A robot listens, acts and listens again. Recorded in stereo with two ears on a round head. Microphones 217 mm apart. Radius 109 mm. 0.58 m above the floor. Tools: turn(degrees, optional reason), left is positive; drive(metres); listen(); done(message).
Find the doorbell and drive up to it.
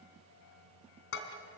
listen()
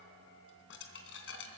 listen()
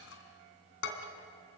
done("I can't make out a doorbell to turn to.")